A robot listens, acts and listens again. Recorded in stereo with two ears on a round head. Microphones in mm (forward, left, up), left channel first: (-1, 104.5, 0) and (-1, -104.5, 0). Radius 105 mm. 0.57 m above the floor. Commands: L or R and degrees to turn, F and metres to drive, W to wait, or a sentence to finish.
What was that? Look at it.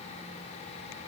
W
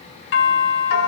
L55
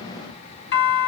L60
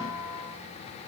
Found it: a doorbell, straight ahead, 2 to 4 m away.